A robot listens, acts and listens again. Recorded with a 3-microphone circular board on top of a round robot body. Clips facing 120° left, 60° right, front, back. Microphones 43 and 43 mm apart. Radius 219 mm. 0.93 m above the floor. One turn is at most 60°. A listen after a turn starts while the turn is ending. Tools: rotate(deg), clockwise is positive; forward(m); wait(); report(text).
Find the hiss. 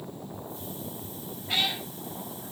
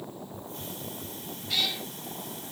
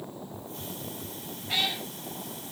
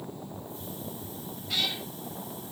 rotate(30)
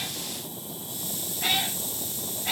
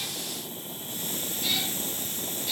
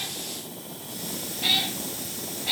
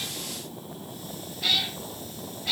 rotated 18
rotate(10)
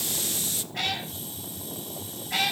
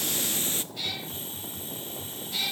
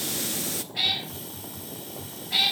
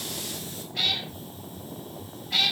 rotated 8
report("Found it: a hiss, straight ahead, under 1 m away.")